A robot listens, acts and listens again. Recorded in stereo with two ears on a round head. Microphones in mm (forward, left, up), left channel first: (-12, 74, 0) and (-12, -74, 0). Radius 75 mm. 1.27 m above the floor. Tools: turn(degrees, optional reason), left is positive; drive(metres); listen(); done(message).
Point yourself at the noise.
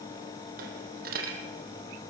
turn(degrees=-55, reason="The dropped coin: about 55° right or 125° right.")
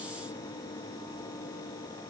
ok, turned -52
listen()
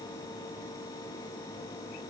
done("I heard a dropped coin, but can't make it out now. It was about straight ahead or 75° right.")